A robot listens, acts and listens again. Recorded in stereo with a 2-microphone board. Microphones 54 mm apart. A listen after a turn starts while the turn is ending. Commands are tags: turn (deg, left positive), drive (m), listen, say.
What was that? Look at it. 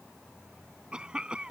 <turn deg="-15"/>
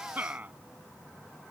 <turn deg="-150"/>
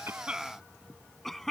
<say>Facing the cough.</say>